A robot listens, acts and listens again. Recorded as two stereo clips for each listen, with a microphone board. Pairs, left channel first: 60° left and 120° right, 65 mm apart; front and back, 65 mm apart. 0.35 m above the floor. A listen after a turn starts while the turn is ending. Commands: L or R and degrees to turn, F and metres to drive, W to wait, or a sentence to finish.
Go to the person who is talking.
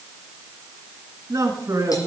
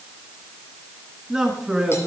R100
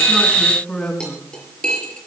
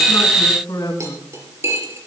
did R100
R15
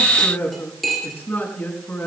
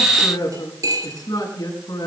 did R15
F1.0
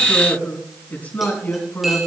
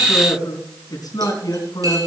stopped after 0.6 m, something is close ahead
Something is in my way. I am facing the man speaking but have not reached it.